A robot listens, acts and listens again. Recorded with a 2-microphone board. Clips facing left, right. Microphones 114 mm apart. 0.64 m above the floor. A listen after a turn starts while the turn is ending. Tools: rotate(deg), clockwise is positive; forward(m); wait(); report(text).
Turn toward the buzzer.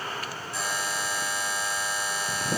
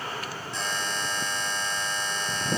rotate(-30)
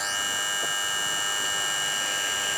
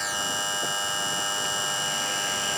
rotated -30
rotate(25)
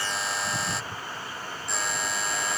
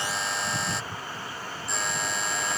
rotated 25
report("Found it: a buzzer, straight ahead.")